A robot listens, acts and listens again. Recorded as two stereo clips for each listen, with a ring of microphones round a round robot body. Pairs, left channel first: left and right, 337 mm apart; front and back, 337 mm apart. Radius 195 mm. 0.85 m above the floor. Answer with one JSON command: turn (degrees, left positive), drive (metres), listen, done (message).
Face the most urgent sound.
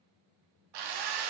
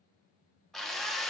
{"listen": true}
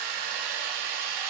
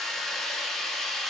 {"listen": true}
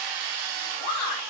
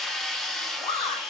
{"turn": 75}
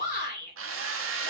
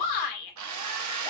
{"turn": 20}
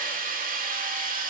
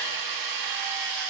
{"listen": true}
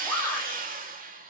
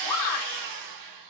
{"turn": 10}
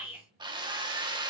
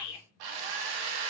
{"done": "Found it: a shout, straight ahead, 2 to 4 m away."}